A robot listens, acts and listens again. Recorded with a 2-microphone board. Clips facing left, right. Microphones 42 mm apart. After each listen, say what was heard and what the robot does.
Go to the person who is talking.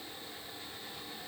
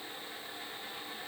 Keep listening.
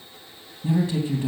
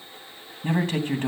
The man speaking: about 55° right or 125° right. Turn 55° right.
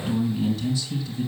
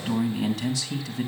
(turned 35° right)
So it is at 85° right. Turn 85° right.
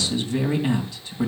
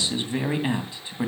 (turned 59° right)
The man speaking is now 25° right. Turn 25° right.
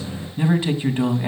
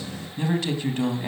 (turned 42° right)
The man speaking is now 15° left. Turn 15° left.
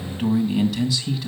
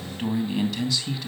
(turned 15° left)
Drive 1.0 m forward.
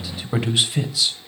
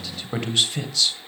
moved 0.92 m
Drive 1.0 m forward.
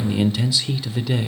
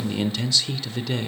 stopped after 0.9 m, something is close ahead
I am next to the man speaking.